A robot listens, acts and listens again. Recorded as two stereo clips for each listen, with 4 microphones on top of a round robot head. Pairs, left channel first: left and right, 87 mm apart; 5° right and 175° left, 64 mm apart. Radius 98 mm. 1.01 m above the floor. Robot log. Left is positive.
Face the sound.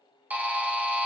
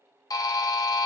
note: The buzzer: 20° right.
cmd yaw -20
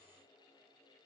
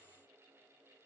cmd idle
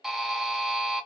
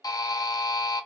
end: Facing the buzzer, under 1 m away.